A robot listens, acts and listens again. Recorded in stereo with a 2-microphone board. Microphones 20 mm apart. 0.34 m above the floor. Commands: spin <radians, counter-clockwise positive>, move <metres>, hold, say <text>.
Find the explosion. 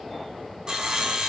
hold
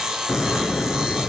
spin 1.22
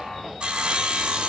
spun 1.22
hold
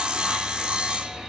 say I heard an explosion, but can't make it out now. It was about straight ahead or 40° left.